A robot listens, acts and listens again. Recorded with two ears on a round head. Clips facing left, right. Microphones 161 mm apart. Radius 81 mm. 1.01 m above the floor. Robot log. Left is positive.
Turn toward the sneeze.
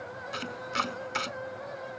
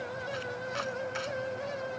cmd idle
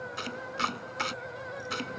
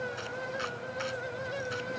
cmd idle
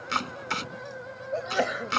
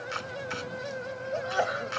note: The sneeze: about 25° left or 155° left.
cmd yaw +25
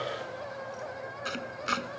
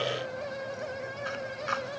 cmd idle
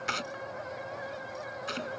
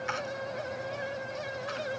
end: I heard a sneeze, but can't make it out now. It was about straight ahead or 130° left.